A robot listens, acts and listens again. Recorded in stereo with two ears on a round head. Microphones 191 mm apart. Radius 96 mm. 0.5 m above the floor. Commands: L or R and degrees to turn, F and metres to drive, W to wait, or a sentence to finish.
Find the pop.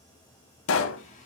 L70
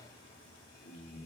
W
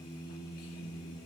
I heard a pop, but can't make it out now. It was about straight ahead or 40° left.